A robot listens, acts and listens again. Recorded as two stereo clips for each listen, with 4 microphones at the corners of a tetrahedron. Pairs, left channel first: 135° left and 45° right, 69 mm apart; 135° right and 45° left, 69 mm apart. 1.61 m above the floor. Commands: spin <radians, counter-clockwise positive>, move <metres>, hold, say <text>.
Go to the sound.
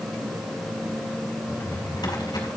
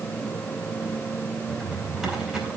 spin 2.18
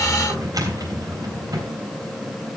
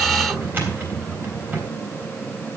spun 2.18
spin -0.26
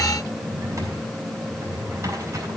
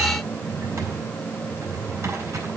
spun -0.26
move 1.0
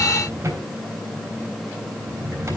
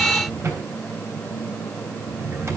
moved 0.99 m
move 1.0
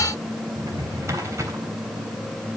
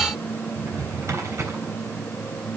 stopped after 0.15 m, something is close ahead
say Something is in my way. I am facing the drawer but have not reached it.